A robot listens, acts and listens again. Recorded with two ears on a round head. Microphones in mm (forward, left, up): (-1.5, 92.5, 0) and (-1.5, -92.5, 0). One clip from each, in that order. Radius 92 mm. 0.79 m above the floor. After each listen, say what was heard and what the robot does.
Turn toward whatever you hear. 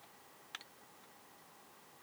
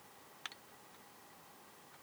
Keep listening.
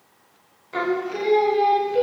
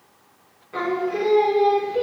The singing: about 60° left or 120° left. Turn 60° left.
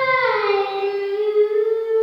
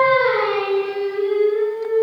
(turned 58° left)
So it is at 70° left. Turn 70° left.
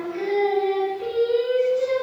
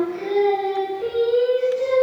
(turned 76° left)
Facing the singing, 2 to 4 m away.